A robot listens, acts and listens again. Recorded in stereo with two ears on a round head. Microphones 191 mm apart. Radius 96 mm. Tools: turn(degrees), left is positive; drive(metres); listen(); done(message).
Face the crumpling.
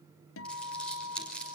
turn(degrees=30)
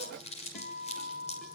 turn(degrees=145)
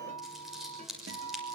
done("Found it: crumpling, straight ahead, over 4 m away.")